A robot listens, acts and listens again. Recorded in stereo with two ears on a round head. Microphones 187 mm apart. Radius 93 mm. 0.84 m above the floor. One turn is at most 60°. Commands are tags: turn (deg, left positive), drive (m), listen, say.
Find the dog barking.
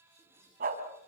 <turn deg="-45"/>
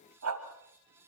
<turn deg="-60"/>
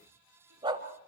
<turn deg="-20"/>
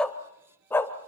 <turn deg="10"/>
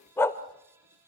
<turn deg="15"/>
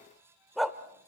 <say>Found it: a dog barking, straight ahead, 1 to 2 m away.</say>